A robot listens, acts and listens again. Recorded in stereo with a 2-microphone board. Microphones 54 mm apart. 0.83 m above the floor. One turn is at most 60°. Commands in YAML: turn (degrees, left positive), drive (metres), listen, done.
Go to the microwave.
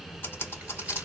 listen: true
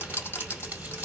listen: true
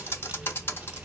done: "I can't make out a microwave, only typing on a keyboard."